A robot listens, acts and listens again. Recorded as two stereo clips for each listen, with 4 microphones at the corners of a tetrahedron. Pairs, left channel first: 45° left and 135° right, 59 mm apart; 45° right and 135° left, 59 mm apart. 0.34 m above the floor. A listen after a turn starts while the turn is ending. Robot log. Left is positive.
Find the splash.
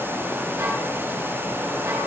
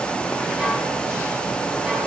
cmd idle
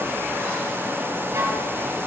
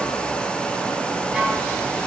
cmd idle
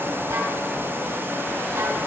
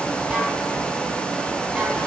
end: I can't make out a splash.